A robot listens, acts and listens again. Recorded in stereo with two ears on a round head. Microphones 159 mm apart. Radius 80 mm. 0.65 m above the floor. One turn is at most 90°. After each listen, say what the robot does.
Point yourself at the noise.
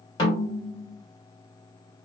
Turn 25° left.
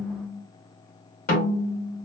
Turn 90° left.
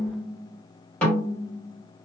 Found it: a snare drum, straight ahead, 2 to 4 m away.